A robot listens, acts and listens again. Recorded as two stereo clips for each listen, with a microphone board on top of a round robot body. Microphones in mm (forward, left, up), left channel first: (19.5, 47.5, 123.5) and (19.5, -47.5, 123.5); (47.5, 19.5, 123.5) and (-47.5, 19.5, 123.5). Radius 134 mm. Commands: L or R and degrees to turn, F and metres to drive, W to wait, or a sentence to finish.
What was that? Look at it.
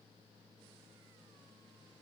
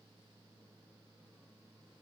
W
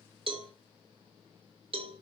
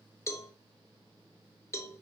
R60
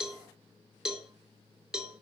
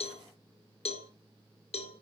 Facing the cowbell.